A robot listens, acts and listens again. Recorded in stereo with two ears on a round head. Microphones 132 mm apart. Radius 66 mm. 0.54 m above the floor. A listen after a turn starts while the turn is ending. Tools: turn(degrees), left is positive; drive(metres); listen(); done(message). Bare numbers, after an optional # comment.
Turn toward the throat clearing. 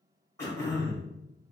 # The throat clearing: about 20° left or 160° left.
turn(20)
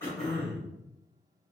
done("Facing the throat clearing, 1 to 2 m away.")